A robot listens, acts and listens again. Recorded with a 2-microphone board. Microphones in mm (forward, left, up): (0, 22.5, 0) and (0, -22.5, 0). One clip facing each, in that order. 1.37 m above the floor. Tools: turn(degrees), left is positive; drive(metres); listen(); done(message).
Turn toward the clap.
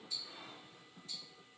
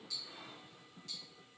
listen()
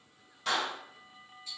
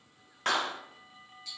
turn(degrees=-50)
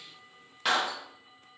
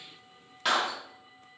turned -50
done("Found it: a clap, straight ahead, under 1 m away.")